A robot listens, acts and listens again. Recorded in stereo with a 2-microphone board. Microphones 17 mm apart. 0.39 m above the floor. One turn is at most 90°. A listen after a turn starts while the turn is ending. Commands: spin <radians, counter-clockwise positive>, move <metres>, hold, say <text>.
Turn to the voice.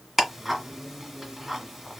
hold
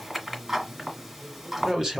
spin -0.79
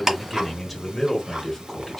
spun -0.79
spin 0.26
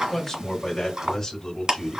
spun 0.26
spin 0.35
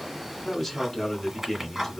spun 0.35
say Facing the man speaking.